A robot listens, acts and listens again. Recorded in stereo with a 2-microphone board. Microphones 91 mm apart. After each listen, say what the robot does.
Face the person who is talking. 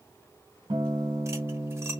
Keep listening.
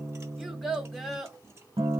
Turn 30° left.
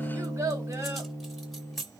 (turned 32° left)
Turn 30° right.
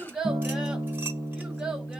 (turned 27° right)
Turn 10° right.
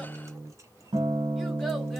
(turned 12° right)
Keep listening.
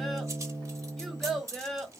Found it: a child speaking, straight ahead.